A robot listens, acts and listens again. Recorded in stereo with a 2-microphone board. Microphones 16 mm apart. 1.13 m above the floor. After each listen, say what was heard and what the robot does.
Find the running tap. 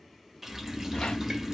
Turn 30° right.
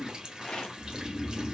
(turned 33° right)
So it is at 135° right. Turn 135° right.
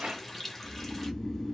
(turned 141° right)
Facing the running tap, 1 to 2 m away.